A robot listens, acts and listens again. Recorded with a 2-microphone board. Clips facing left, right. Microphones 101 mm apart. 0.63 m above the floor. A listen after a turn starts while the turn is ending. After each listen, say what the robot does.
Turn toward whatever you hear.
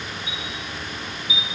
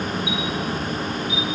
Turn 70° right.
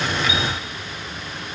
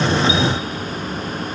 Keep listening.
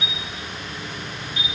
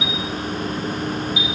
Turn 10° right.
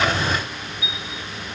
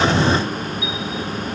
Found it: a chime, straight ahead.